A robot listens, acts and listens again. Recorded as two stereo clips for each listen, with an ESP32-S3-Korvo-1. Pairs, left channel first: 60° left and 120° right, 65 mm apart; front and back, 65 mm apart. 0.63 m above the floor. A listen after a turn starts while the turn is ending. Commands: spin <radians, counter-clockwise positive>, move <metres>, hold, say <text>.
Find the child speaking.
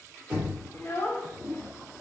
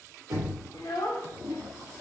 say Found it: a child speaking, straight ahead.